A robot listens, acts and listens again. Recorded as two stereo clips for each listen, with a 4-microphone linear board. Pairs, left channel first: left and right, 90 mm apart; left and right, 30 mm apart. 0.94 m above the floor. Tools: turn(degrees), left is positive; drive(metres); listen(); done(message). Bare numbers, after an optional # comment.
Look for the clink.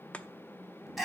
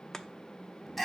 listen()
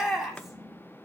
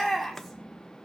listen()
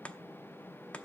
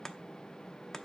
done("I can't make out a clink to turn to.")